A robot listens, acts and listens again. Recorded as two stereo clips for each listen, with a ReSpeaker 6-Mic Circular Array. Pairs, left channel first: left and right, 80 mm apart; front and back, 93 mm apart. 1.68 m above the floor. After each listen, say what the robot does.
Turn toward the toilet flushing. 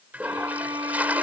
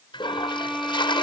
Turn 20° right.
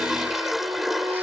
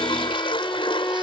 Facing the toilet flushing.